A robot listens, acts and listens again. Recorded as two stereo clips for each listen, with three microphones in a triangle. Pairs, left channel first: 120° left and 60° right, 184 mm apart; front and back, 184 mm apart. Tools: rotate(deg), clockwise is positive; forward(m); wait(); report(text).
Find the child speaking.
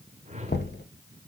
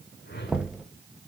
wait()
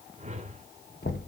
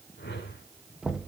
wait()
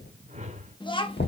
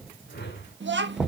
rotate(-180)
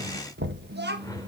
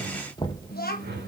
rotate(40)
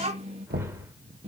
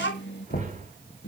report("Found it: a child speaking, straight ahead, 1 to 2 m away.")